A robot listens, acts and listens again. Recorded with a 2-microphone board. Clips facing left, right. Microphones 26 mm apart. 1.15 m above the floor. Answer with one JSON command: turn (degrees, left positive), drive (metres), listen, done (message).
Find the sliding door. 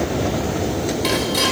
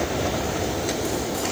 {"listen": true}
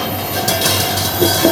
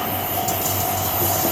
{"listen": true}
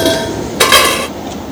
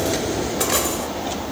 {"done": "I can't make out a sliding door, only dishes clattering."}